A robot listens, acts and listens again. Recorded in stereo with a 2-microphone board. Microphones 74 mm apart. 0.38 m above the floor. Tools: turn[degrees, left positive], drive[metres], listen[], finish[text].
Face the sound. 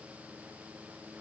Action: listen[]
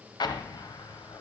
Thought: The explosion: about 70° left or 110° left.
Action: turn[70]
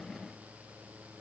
Action: listen[]
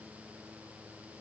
Action: finish[I heard an explosion, but can't make it out now. It was about straight ahead or 40° left.]